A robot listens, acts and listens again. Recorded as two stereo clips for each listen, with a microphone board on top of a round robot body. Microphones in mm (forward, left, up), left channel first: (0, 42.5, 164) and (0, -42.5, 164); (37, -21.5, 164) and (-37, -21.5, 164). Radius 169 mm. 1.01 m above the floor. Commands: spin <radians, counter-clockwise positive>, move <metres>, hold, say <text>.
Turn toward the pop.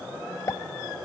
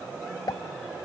spin 0.70
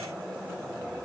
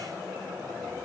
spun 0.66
say I heard a pop from this way, but can't make it out now.